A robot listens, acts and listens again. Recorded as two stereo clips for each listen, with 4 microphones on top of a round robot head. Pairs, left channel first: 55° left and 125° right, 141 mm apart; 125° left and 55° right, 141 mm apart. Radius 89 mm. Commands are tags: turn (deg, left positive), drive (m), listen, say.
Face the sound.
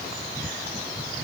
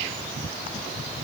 <listen/>
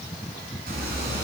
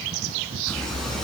<turn deg="-150"/>
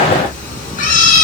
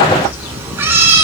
<turn deg="20"/>
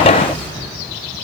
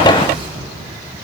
<say>Found it: a cat meowing, straight ahead, 2 to 4 m away.</say>